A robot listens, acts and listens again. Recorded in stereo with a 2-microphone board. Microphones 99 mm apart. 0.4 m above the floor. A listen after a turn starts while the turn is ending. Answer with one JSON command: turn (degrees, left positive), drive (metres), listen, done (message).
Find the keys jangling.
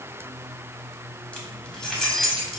{"turn": 30}
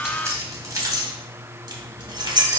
{"turn": -50}
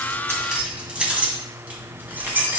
{"turn": -20}
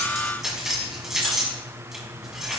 {"done": "Facing the keys jangling."}